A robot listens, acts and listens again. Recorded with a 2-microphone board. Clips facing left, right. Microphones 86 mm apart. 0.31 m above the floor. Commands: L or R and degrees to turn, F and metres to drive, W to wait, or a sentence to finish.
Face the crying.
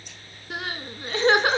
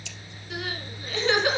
L40
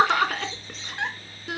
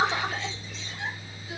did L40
L95
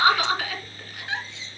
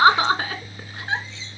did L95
R35
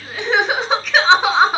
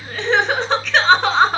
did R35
Facing the crying.